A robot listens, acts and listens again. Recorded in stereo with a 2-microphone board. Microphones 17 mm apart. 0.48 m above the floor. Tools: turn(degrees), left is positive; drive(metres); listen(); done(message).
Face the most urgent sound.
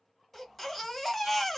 turn(degrees=30)
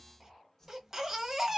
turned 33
turn(degrees=-20)
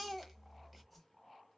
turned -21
done("Facing the baby crying, 1 to 2 m away.")